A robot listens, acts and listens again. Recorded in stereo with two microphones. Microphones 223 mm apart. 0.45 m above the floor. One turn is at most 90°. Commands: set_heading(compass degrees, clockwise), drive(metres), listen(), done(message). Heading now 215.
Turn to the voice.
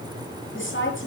set_heading(155)
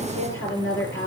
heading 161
set_heading(96)
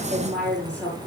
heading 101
done("Facing the woman speaking, over 4 m away.")